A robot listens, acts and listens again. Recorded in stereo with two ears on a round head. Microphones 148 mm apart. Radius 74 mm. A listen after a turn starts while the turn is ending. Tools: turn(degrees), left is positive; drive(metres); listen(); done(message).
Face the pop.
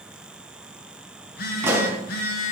turn(degrees=-15)
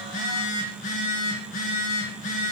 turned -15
listen()
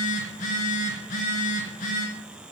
done("I heard a pop, but can't make it out now. It was about straight ahead or 150° right.")